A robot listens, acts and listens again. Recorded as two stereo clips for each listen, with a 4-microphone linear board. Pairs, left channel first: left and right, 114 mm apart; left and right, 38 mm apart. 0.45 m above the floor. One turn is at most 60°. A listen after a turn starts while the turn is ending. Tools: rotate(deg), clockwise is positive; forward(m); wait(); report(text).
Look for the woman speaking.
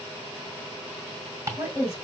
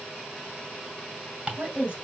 rotate(25)
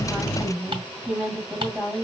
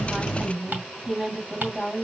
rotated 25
report("Found it: a woman speaking, straight ahead.")